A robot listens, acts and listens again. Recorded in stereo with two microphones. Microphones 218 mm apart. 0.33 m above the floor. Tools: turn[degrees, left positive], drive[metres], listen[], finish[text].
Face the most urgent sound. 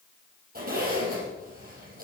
Action: listen[]
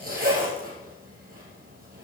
Action: listen[]
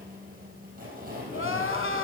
Thought: The crying: about 70° left or 110° left.
Action: turn[70]
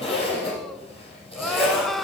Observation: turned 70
Action: finish[Found it: crying, straight ahead, under 1 m away.]